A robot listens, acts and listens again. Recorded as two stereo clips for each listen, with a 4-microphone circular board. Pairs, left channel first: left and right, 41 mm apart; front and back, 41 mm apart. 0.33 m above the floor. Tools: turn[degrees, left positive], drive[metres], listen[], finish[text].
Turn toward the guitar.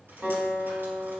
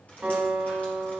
Thought: The guitar: 125° right.
Action: turn[-125]
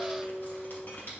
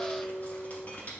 Thought: The guitar is now 20° right.
Action: turn[-20]
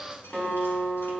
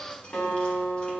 Action: finish[Found it: a guitar, straight ahead, 2 to 4 m away.]